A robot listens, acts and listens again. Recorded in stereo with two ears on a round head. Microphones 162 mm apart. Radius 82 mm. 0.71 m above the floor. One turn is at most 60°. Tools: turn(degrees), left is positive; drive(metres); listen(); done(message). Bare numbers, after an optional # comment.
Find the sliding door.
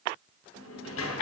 turn(60)
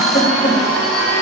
# Nothing new. It was at 30° left.
turn(30)
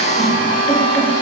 listen()
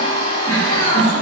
done("I heard a sliding door from this way, but can't make it out now.")